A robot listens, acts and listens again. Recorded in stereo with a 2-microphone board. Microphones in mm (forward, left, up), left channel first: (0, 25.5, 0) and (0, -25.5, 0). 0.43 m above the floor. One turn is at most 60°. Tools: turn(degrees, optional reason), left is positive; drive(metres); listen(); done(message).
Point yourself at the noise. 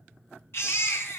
turn(degrees=55, reason="The baby crying: about 55° left or 125° left.")
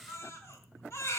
turn(degrees=60, reason="So it is at 65° left.")
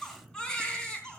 turn(degrees=15, reason="The baby crying is now 15° left.")
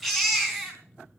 done("Facing the baby crying, 2 to 4 m away.")